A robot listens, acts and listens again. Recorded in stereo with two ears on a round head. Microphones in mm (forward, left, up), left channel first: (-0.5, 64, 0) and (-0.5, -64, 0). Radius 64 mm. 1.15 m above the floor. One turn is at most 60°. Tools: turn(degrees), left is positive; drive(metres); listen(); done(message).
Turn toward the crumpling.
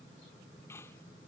listen()
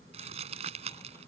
turn(degrees=-45)
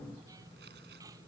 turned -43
listen()
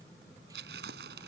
turn(degrees=-60)
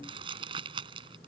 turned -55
turn(degrees=-35)
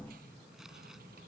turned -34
listen()
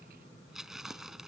done("Facing the crumpling.")